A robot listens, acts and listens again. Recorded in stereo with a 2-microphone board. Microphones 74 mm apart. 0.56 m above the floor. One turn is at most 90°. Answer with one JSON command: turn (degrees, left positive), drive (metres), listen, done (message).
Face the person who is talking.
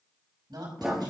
{"turn": -75}
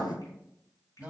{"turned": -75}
{"turn": -20}
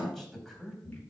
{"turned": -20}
{"done": "Facing the woman speaking."}